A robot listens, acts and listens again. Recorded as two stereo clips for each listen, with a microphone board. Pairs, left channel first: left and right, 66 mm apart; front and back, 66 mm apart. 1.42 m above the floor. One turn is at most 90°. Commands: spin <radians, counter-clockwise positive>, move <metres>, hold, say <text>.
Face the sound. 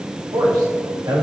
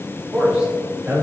spin -1.57
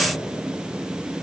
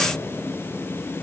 spin -0.35
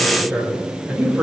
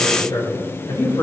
spin -0.35
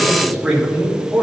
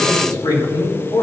spin -0.17
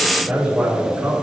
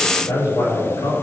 spin -0.17
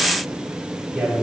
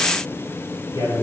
say Facing the man speaking.